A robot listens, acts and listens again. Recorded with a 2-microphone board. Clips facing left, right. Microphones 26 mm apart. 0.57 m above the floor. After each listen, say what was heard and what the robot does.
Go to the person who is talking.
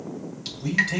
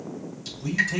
The man speaking: about 65° left or 115° left. Turn 65° left.
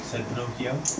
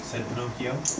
So it is at 20° left. Turn 20° left.
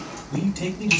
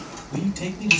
Drive 1.0 m forward.
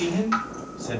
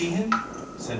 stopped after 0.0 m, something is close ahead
Something is in my way. I am facing the man speaking but have not reached it.